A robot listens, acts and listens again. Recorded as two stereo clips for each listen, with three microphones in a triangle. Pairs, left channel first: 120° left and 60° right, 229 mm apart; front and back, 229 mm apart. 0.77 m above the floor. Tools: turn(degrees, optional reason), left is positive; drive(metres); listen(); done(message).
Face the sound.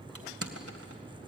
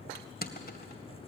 turn(degrees=-50, reason="The crushing: 50° right.")
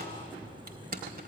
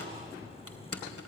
turn(degrees=-10, reason="The crushing is now 10° right.")
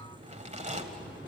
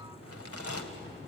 done("Found it: crushing, straight ahead.")